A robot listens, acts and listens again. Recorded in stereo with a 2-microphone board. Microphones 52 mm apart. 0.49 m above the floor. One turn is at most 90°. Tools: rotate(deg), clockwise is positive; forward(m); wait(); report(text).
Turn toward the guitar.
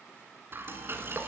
wait()
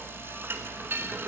wait()
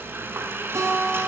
rotate(90)
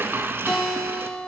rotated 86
rotate(-10)
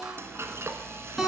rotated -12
report("Found it: a guitar, straight ahead, over 4 m away.")